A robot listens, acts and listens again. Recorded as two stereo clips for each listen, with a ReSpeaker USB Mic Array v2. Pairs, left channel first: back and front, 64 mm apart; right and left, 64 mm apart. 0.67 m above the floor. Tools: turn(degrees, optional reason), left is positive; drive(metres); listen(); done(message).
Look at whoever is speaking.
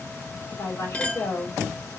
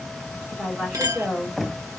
turn(degrees=160, reason="The woman speaking: 160° left.")
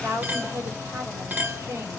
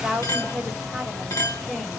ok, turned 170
turn(degrees=-10, reason="The woman speaking is now 10° right.")
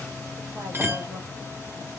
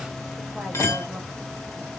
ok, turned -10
listen()
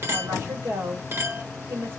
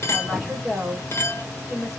done("Found it: a woman speaking, straight ahead.")